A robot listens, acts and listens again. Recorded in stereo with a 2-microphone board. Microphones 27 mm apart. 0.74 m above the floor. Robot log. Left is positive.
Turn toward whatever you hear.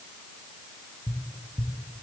note: The tapping: about 60° left or 120° left.
cmd yaw +60
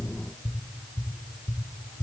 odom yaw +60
note: So it is at 45° left.
cmd yaw +45
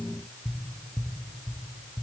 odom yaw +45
note: The tapping is now 15° right.
cmd yaw -15
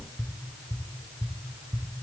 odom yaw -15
note: The tapping is now 10° right.
cmd yaw -10
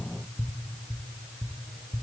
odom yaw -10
end: Facing the tapping.